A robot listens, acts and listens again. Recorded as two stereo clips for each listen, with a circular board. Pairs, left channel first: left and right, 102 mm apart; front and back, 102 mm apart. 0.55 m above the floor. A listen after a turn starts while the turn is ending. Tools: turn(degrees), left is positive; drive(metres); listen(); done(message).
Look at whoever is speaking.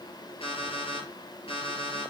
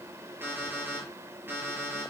listen()
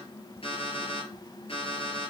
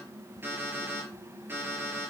listen()
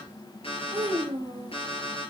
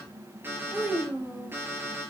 turn(degrees=-100)
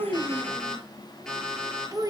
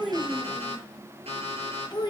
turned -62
turn(degrees=-40)
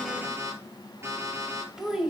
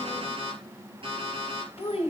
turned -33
done("Found it: a child speaking, straight ahead.")